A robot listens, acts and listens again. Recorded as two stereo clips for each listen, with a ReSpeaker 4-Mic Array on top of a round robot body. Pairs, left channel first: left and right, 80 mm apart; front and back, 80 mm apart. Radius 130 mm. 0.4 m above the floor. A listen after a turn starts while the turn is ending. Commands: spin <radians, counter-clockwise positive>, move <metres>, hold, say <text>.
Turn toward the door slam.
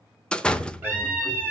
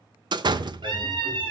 spin 2.88
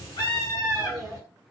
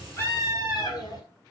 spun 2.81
say Facing where the door slam came from. I can't hear it now.